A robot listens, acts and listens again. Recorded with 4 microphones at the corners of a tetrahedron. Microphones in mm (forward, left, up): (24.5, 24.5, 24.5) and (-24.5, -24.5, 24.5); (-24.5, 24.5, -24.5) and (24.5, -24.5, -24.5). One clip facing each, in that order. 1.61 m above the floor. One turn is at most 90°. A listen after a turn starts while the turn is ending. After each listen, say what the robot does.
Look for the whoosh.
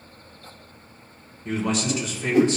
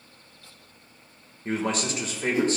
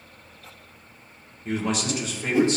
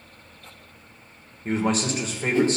Turn 60° left.
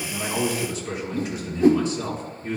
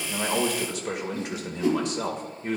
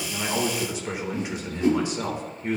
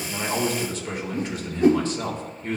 Found it: a whoosh, straight ahead, under 1 m away.